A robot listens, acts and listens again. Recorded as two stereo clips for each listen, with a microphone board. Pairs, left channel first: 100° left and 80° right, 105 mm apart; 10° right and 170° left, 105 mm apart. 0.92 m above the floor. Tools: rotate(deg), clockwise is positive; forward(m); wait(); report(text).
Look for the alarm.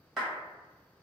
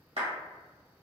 wait()
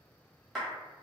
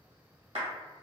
wait()
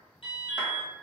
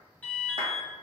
rotate(-60)
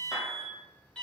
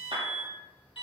rotate(-20)
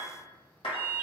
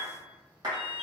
report("Facing the alarm.")